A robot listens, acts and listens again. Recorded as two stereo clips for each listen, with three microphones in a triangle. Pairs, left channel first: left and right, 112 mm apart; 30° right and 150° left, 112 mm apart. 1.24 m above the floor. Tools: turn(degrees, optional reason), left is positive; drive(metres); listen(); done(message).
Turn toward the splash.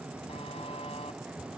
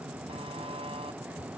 listen()
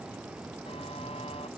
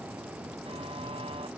listen()
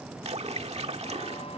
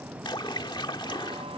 turn(degrees=-75, reason="The splash: 75° right.")
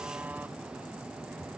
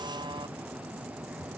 done("Facing where the splash came from. I can't hear it now.")